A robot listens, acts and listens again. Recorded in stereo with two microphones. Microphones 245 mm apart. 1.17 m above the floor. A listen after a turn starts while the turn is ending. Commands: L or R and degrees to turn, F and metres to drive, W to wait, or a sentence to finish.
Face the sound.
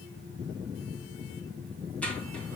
L30
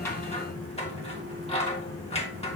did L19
L155
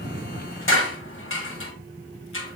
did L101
L55
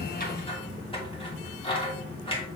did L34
L20
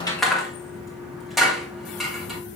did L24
Found it: scissors, straight ahead, 1 to 2 m away.